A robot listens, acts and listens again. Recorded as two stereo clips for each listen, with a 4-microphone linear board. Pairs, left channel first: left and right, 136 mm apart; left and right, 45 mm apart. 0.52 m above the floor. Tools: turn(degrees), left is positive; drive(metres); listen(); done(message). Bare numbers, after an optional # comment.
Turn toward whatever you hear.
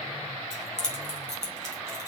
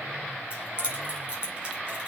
# The keys jangling: about 25° right or 155° right.
turn(-25)
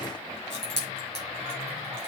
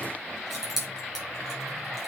done("Facing the keys jangling, over 4 m away.")